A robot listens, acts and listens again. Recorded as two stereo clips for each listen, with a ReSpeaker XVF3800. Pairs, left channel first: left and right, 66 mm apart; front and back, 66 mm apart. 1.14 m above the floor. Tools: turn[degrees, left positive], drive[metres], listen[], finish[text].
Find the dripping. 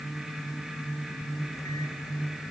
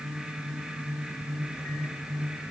Action: listen[]
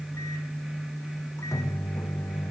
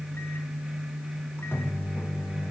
Action: listen[]
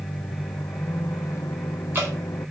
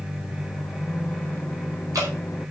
Thought: The dripping: 145° right.
Action: turn[-145]
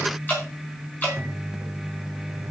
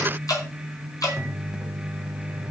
Thought: The dripping is now 30° left.
Action: turn[30]
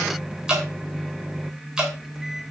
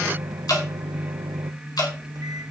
Thought: The dripping is now 10° right.
Action: turn[-10]
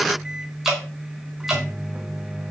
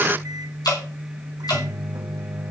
Action: finish[Found it: dripping, straight ahead, over 4 m away.]